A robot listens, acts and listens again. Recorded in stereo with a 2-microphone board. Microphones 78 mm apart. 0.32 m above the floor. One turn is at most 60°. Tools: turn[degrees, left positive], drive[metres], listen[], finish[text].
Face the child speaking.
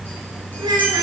Action: turn[-60]
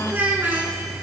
Thought: So it is at 20° right.
Action: turn[-20]
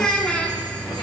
Thought: The child speaking is now 10° left.
Action: turn[10]
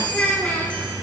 Thought: The child speaking is now 20° left.
Action: turn[20]
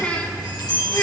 Thought: The child speaking is now 30° left.
Action: turn[30]
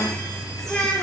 Thought: The child speaking is now 15° left.
Action: turn[15]
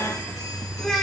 Action: finish[Facing the child speaking, 2 to 4 m away.]